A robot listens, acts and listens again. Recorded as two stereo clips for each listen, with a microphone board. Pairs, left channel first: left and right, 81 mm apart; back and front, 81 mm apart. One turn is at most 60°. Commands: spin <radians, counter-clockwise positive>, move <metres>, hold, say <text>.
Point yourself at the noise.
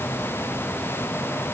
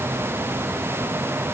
hold
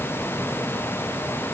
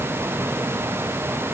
hold
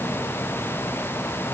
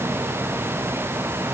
say I can't make out anything.